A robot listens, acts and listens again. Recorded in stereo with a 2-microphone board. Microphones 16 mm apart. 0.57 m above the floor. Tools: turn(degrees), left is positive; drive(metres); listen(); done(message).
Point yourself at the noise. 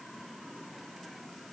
listen()
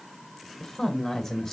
turn(degrees=40)
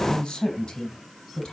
turn(degrees=110)
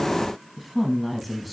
done("Facing the woman speaking, over 4 m away.")